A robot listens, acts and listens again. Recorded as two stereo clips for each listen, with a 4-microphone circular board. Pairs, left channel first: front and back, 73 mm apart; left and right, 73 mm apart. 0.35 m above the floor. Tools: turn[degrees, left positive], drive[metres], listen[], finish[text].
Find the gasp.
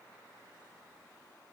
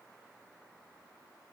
Action: listen[]
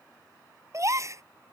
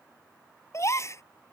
Thought: The gasp: 140° left.
Action: turn[140]
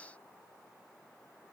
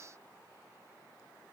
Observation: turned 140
Action: finish[I heard a gasp from this way, but can't make it out now.]